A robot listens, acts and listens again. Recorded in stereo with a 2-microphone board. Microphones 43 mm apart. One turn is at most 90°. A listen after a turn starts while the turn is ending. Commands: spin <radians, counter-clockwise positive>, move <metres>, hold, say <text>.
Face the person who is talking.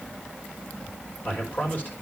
spin 0.70
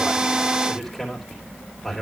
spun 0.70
say Facing the man speaking, 2 to 4 m away.